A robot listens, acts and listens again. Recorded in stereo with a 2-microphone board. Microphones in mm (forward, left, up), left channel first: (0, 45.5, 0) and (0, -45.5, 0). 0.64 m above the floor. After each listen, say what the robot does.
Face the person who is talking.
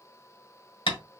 Keep listening.
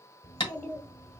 Turn 35° left.
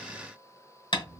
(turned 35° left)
Facing the child speaking, 1 to 2 m away.